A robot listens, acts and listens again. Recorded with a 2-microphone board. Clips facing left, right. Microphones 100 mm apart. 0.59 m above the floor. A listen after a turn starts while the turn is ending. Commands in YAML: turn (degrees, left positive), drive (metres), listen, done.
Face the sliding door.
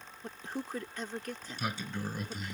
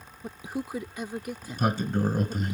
turn: -45
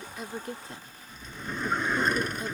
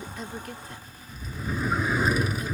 done: "Found it: a sliding door, straight ahead."